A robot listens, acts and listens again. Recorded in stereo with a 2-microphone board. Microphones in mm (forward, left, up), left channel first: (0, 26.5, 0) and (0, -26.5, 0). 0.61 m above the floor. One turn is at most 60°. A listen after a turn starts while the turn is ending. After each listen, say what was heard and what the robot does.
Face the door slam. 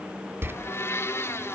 The door slam: about 45° right or 135° right. Turn 45° right.
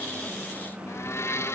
Keep listening.
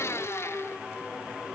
I heard a door slam, but can't make it out now. It was about straight ahead or 90° right.